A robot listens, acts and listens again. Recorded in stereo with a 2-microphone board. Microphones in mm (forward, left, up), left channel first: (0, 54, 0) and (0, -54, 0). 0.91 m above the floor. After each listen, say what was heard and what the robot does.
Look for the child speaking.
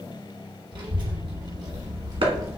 The child speaking: about 30° right or 150° right. Turn 30° right.
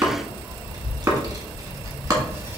The child speaking: about 20° right or 160° right. Turn 20° right.
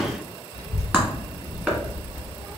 The child speaking: about 25° right or 155° right. Turn 25° right.
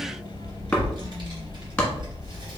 The child speaking: about 45° right or 135° right. Turn 45° right.
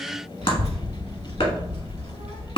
So it is at 75° right. Turn 75° right.
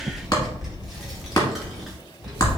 Facing the child speaking.